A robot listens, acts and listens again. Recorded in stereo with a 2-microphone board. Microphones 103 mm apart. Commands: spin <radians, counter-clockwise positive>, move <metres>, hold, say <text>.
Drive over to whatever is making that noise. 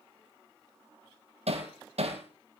spin -1.57
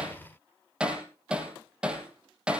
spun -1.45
spin -0.17
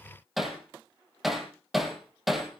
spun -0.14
move 1.0
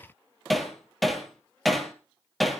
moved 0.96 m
move 1.0
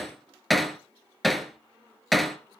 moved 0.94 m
move 1.0
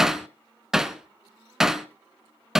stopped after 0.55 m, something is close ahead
say I am next to the hammering.